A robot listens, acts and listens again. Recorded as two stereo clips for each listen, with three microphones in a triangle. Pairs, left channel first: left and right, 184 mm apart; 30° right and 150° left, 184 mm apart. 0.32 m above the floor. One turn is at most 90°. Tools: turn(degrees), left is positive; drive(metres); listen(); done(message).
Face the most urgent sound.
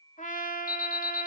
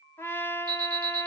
turn(degrees=90)
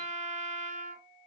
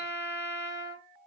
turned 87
turn(degrees=35)
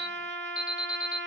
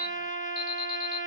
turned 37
done("Found it: an alarm, straight ahead, 1 to 2 m away.")